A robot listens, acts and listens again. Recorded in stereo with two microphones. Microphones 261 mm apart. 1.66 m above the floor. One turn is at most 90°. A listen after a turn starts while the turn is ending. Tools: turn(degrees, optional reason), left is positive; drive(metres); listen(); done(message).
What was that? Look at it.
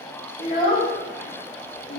turn(degrees=55, reason="The child speaking: about 55° left or 125° left.")
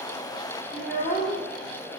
turn(degrees=35, reason="So it is at 35° left.")
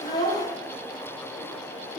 listen()
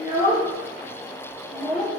turn(degrees=35, reason="The child speaking is now 35° left.")
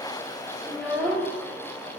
done("Facing the child speaking.")